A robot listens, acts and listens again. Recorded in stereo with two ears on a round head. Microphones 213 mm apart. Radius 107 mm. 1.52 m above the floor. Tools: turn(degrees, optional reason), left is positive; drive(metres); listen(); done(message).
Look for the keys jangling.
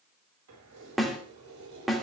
turn(degrees=-90)
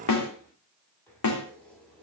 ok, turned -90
done("Found it: keys jangling, straight ahead.")